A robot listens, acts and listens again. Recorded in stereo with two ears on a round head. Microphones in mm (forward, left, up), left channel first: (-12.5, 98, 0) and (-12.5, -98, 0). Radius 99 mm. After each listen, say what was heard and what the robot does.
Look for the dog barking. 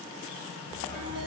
Turn 30° left.
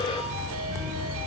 So it is at 25° right. Turn 25° right.
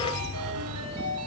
Found it: a dog barking, straight ahead.